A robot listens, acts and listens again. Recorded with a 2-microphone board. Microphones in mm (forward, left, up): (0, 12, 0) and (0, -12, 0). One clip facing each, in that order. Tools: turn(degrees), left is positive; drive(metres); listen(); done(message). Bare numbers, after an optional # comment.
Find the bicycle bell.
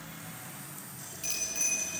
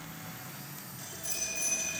# The bicycle bell: about 65° left or 115° left.
turn(65)
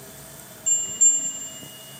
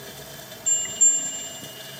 done("Found it: a bicycle bell, straight ahead.")